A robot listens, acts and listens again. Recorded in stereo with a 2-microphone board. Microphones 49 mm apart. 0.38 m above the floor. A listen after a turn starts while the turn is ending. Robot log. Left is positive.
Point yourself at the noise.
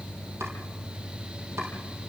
cmd idle
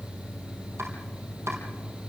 note: The chopping: about 65° right or 115° right.
cmd yaw -65
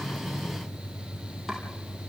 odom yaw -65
cmd idle
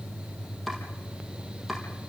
end: Facing the chopping, over 4 m away.